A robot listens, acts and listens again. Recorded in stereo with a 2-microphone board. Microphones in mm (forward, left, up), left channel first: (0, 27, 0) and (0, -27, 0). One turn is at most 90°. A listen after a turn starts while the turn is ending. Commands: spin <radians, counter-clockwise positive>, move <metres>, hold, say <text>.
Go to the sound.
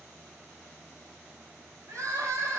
spin -1.57
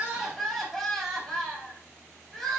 spin 0.17
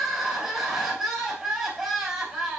move 1.0
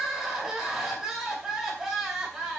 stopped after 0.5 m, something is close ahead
say Something is in my way. I am facing the crying but have not reached it.